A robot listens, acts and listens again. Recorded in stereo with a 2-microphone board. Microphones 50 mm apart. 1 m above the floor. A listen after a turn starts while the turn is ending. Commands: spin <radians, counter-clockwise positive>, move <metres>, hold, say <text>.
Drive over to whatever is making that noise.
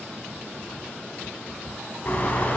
spin 0.70
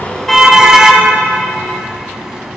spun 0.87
spin -0.17
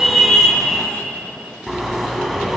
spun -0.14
move 1.0
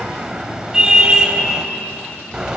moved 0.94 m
spin -0.26
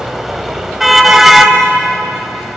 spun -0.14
move 1.0
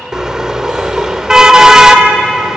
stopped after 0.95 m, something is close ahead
spin -0.26
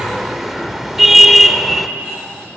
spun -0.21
say Arrived at the car horn, straight ahead.